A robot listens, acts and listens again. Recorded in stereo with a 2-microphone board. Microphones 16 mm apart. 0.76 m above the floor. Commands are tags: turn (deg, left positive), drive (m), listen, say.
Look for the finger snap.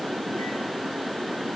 <listen/>
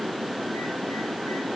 <listen/>
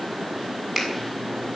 <turn deg="30"/>
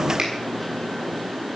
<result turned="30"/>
<listen/>
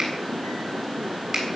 <turn deg="-35"/>
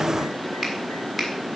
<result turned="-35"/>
<say>Found it: a finger snap, straight ahead, over 4 m away.</say>